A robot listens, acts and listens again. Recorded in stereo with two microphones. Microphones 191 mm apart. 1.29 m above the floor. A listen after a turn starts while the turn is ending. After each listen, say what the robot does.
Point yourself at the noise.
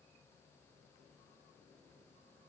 Keep listening.
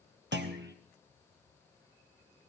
Turn 65° right.
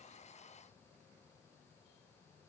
Keep listening.
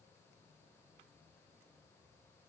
I heard a clunk, but can't make it out now. It was about straight ahead or 50° right.